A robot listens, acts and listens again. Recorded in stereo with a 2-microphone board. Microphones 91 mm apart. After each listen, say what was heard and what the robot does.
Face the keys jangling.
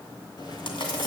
The keys jangling: about 50° left or 130° left. Turn 50° left.
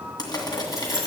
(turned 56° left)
Found it: keys jangling, straight ahead.